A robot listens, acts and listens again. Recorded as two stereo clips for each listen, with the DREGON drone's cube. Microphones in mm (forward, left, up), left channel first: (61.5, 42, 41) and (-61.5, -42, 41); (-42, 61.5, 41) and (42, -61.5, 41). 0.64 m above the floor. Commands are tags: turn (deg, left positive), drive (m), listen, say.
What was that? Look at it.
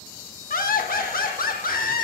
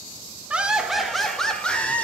<turn deg="45"/>
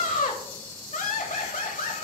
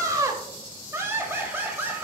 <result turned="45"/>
<turn deg="20"/>
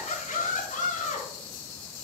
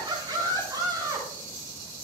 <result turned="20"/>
<turn deg="10"/>
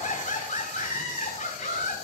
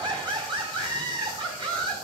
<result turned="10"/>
<say>Facing the laughter, over 4 m away.</say>